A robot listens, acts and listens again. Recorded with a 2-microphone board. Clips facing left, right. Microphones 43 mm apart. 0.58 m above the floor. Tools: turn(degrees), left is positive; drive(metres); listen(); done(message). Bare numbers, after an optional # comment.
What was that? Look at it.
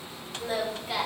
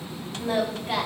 # The singing: about 50° right or 130° right.
turn(-50)
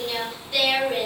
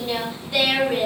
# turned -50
done("Found it: singing, straight ahead, 1 to 2 m away.")